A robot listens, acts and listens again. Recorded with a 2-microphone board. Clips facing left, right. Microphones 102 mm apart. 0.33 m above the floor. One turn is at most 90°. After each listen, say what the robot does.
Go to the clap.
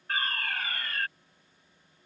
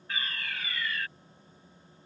Keep listening.
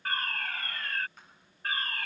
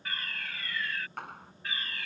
Turn 70° right.
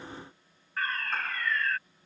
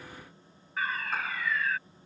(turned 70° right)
Keep listening.
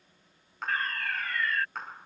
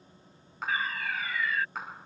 Drive 1.0 m forward.
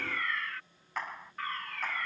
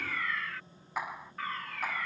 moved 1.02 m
Turn 10° right.
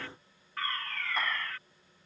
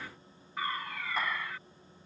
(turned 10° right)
Keep listening.
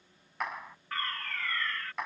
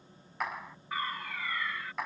Drive 1.0 m forward.
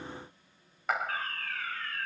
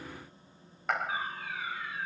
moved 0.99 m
Drive 1.0 m forward.
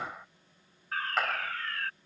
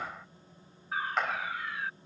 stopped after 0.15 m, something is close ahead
Arrived at the clap, straight ahead.